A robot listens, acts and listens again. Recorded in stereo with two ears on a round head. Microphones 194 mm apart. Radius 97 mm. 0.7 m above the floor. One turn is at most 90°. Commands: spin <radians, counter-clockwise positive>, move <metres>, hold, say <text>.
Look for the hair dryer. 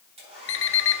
spin -0.52
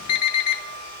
spin -1.57
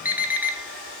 spin -0.44
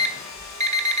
say Found it: a hair dryer, straight ahead.